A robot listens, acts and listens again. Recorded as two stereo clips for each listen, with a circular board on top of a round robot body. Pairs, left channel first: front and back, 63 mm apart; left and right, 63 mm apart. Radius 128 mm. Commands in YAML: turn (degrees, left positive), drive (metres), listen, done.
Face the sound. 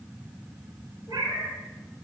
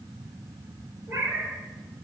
turn: -140
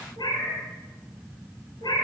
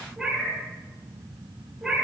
done: "Found it: a cat meowing, straight ahead."